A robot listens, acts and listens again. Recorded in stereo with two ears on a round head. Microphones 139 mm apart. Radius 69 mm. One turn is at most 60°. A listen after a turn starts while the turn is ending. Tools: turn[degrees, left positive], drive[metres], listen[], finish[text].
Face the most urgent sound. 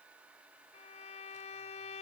Action: listen[]
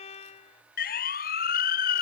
Thought: The siren: about 65° left or 115° left.
Action: turn[60]
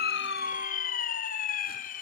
Thought: So it is at 55° left.
Action: turn[55]
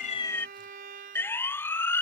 Thought: The siren is now 15° left.
Action: turn[15]
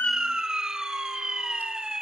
Action: finish[Facing the siren.]